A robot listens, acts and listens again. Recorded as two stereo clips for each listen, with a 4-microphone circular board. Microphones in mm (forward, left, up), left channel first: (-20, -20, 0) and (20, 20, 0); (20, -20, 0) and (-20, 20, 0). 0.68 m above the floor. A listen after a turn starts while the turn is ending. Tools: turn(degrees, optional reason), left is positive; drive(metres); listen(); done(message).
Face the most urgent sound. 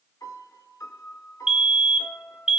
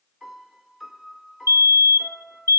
turn(degrees=125, reason="The fire alarm: 125° left.")
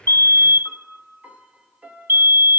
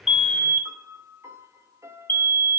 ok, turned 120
done("Facing the fire alarm.")